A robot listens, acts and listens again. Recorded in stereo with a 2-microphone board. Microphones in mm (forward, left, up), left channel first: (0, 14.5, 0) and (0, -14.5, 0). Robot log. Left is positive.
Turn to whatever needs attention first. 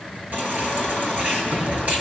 note: The baby crying: about 60° right or 120° right.
cmd yaw -60
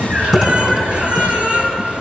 note: So it is at 60° right.
cmd yaw -60
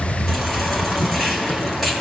cmd idle
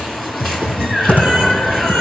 end: Found it: a baby crying, straight ahead.